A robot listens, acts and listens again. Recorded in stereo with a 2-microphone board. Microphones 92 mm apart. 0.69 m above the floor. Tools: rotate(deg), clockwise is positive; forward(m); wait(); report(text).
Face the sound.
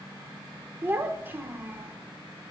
rotate(25)
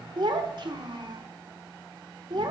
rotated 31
rotate(125)
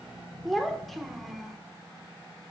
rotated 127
report("Found it: a child speaking, straight ahead.")